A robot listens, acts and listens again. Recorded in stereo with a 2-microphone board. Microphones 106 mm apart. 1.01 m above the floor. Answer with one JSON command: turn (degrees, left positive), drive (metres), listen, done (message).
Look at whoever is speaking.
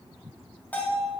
{"listen": true}
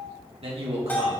{"turn": -70}
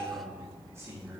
{"turn": -30}
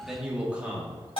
{"turn": -15}
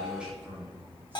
{"turn": -15}
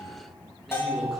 {"done": "Found it: a man speaking, straight ahead."}